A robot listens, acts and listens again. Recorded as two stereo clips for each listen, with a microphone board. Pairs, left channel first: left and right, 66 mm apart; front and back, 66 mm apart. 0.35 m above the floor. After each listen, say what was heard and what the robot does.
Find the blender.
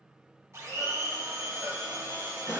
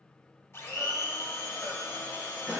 The blender: 50° right. Turn 50° right.
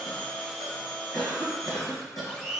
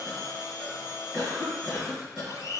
Found it: a blender, straight ahead.